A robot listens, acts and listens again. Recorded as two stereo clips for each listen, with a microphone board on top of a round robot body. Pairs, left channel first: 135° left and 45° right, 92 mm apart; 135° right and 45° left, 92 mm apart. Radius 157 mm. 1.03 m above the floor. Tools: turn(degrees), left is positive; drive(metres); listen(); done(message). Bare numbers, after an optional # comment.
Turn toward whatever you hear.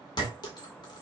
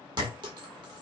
# The clink: 90° left.
turn(90)
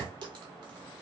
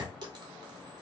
done("Facing the clink, 1 to 2 m away.")